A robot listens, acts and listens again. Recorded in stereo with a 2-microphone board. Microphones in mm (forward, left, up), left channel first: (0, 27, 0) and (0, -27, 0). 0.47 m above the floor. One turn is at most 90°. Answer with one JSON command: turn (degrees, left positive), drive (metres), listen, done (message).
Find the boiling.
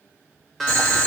{"turn": 30}
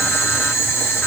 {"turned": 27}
{"turn": 90}
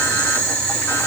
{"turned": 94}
{"turn": 25}
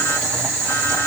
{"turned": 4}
{"turn": 20}
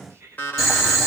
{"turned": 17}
{"done": "Facing the boiling."}